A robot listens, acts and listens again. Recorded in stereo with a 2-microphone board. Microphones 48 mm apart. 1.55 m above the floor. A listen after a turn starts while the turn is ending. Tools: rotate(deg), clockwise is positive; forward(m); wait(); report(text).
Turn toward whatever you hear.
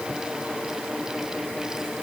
wait()
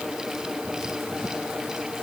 wait()
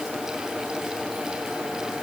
report("I can't make out anything.")